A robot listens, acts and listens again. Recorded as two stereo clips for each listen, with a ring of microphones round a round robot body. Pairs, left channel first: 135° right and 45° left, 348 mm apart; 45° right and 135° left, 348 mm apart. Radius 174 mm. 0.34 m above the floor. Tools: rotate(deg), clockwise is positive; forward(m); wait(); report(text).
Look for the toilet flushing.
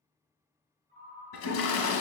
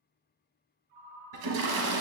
rotate(-170)
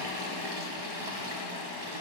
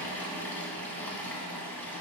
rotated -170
rotate(-40)
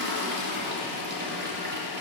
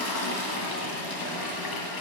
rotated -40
rotate(15)
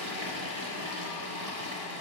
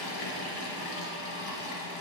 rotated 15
report("Found it: a toilet flushing, straight ahead.")